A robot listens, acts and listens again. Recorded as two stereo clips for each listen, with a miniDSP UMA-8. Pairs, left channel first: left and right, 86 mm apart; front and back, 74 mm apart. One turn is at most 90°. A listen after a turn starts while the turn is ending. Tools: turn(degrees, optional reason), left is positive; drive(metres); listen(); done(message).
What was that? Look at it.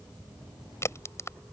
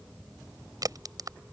turn(degrees=90, reason="The crack: 150° left.")
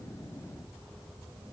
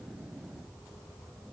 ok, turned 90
turn(degrees=60, reason="Nothing new. It was at 60° left.")
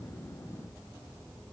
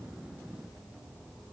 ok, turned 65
done("I heard a crack from this way, but can't make it out now.")